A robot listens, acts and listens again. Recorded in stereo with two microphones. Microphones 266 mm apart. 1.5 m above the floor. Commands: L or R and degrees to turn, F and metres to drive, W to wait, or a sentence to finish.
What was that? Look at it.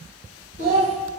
L60
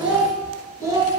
R15
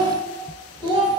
R20
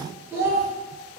R10
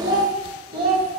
R20
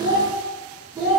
Found it: a child speaking, straight ahead.